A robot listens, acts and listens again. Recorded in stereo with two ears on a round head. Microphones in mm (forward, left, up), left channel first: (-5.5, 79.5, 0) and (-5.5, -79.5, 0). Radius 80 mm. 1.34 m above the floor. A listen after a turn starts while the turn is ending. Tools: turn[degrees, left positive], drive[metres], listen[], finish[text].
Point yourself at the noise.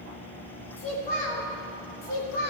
Thought: The child speaking: about 55° left or 125° left.
Action: turn[55]
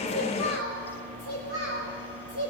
Thought: So it is at 50° left.
Action: turn[50]
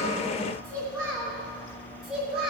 Action: finish[Found it: a child speaking, straight ahead.]